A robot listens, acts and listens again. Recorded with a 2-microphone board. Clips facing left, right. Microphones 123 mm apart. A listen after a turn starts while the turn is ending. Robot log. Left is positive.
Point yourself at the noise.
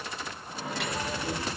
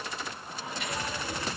note: The microwave: about 75° left or 105° left.
cmd yaw +75
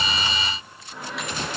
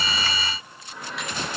end: Facing the microwave.